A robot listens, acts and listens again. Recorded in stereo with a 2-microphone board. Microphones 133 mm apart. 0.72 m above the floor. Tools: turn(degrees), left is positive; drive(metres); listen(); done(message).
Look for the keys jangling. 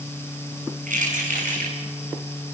turn(degrees=-90)
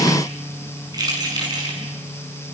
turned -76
turn(degrees=-30)
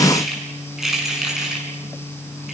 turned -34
done("Facing the keys jangling.")